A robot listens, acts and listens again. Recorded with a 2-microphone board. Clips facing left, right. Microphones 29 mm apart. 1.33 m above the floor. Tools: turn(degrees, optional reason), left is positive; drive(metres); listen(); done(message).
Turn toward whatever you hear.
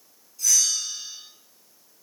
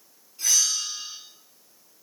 turn(degrees=-45, reason="The bell: about 45° right or 135° right.")
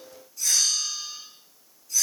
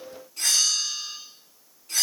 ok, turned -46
turn(degrees=-90, reason="So it is at 90° right.")
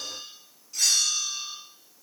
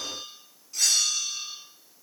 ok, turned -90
done("Facing the bell, 2 to 4 m away.")